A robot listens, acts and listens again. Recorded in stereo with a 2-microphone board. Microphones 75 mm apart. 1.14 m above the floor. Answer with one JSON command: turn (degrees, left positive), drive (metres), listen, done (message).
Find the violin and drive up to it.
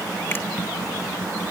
{"listen": true}
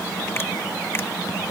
{"listen": true}
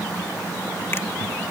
{"done": "I can't make out a violin."}